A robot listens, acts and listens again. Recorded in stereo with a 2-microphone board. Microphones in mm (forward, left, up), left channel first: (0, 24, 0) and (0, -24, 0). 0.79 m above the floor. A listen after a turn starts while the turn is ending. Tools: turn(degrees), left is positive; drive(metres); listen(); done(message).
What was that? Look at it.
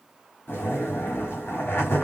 turn(degrees=55)
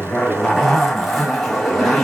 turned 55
done("Facing the zipper, 1 to 2 m away.")